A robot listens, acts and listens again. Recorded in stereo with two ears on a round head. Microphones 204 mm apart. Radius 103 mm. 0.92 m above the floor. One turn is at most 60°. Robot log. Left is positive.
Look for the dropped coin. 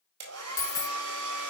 note: The dropped coin: about 15° left or 165° left.
cmd yaw +15
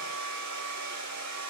cmd idle
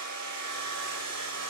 end: I heard a dropped coin, but can't make it out now. It was about straight ahead or 150° left.